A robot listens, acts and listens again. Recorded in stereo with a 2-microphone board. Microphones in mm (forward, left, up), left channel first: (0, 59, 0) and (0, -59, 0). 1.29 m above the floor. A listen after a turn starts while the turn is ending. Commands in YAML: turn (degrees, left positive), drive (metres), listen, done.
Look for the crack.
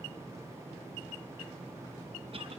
listen: true
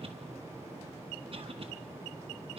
listen: true
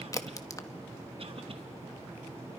turn: 30
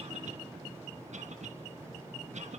listen: true
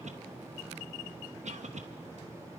done: "I heard a crack, but can't make it out now. It was about straight ahead or 120° left."